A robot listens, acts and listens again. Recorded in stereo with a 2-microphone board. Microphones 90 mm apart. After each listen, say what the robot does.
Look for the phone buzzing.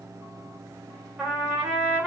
Keep listening.
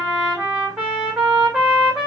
Keep listening.
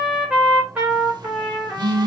Turn 50° right.
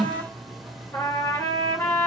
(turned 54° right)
Found it: a phone buzzing, straight ahead, under 1 m away.